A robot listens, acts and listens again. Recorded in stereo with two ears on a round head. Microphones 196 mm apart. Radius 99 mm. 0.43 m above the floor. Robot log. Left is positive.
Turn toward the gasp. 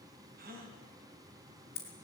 note: The gasp: about 40° right or 140° right.
cmd yaw -40
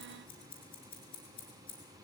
cmd idle
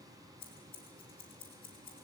end: I heard a gasp, but can't make it out now. It was about straight ahead or 100° right.